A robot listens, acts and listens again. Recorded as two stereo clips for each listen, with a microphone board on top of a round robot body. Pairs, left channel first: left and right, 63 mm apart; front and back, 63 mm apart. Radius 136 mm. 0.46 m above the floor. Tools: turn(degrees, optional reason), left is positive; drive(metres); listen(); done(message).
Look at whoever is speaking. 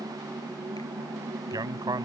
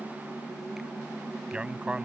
turn(degrees=-105, reason="The man speaking: 105° right.")
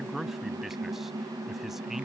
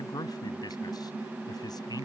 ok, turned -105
done("Found it: a man speaking, straight ahead.")